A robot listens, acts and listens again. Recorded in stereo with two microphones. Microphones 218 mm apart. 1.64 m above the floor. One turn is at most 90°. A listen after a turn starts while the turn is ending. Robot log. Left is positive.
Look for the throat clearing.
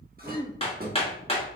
note: The throat clearing: about 20° right or 160° right.
cmd yaw -20
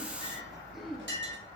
end: Found it: throat clearing, straight ahead, 1 to 2 m away.